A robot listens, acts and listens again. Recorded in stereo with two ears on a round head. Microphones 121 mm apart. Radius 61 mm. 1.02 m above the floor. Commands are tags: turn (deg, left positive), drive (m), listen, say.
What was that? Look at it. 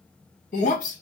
<turn deg="65"/>
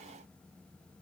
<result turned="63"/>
<listen/>
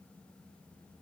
<say>I heard breaking glass, but can't make it out now. It was about straight ahead or 55° left.</say>